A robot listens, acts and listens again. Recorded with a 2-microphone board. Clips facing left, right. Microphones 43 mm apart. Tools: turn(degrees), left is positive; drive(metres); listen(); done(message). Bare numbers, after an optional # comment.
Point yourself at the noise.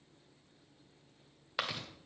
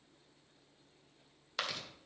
turn(30)
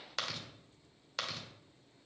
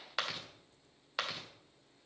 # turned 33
# So it is at 20° right.
turn(-20)
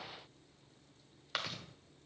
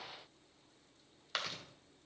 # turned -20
done("Found it: chewing, straight ahead.")